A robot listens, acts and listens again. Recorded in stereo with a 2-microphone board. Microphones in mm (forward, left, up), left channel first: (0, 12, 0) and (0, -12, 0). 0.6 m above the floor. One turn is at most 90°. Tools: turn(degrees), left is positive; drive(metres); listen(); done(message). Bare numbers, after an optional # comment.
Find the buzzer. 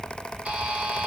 # The buzzer: about 70° right or 110° right.
turn(-70)
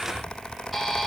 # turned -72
done("Facing the buzzer, 1 to 2 m away.")